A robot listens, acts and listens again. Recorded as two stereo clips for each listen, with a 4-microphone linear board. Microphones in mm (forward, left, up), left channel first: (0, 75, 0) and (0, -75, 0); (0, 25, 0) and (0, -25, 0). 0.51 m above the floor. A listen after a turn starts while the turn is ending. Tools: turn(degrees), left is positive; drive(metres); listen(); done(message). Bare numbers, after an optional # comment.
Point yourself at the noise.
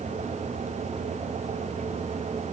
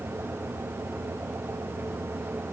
listen()
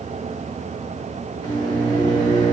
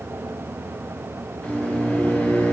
# The microwave: about 30° left or 150° left.
turn(30)
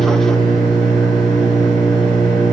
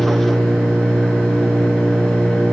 done("Found it: a microwave, straight ahead, 1 to 2 m away.")